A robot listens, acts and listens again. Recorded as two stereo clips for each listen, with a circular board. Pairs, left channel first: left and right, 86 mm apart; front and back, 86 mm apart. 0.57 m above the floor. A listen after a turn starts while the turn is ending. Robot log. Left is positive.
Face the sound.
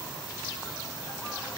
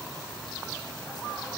cmd idle
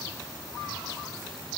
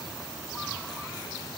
cmd idle
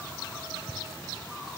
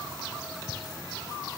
end: I can't make out anything.